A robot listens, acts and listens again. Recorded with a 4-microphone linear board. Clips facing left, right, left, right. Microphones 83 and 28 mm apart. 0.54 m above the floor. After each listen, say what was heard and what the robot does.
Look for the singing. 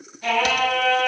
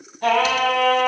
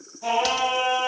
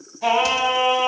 The singing: about 55° right or 125° right. Turn 55° right.
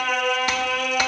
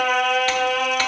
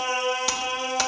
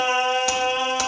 So it is at 80° right. Turn 80° right.
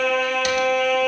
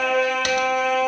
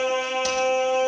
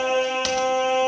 The singing is now 25° right. Turn 25° right.
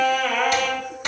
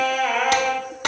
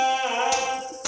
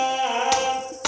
The singing is now 10° right. Turn 10° right.
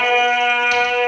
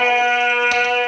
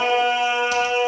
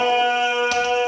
The singing is now 20° right. Turn 20° right.
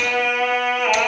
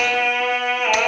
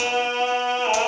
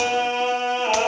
Facing the singing, 2 to 4 m away.